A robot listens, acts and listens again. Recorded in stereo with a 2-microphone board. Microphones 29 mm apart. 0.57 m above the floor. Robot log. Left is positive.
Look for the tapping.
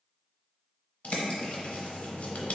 cmd idle
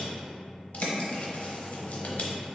cmd idle
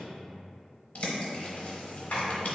note: The tapping: about 70° left or 110° left.
cmd yaw +70
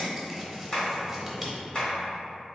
note: So it is at 40° left.
cmd yaw +40
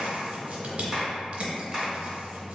end: Facing the tapping, 1 to 2 m away.